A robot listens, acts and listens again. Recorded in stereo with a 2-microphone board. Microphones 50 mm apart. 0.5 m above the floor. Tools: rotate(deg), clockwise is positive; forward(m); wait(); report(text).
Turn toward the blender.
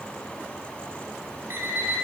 wait()
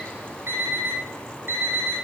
wait()
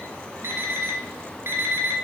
report("I can't make out a blender to turn to.")